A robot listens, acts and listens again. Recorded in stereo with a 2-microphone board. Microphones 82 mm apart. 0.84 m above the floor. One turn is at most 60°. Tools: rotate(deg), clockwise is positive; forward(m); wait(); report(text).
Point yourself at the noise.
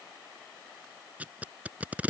rotate(20)
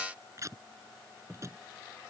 rotate(60)
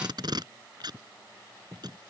rotate(60)
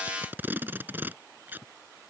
rotate(25)
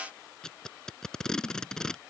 rotate(-10)
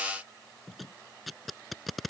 report("Facing the tape being pulled.")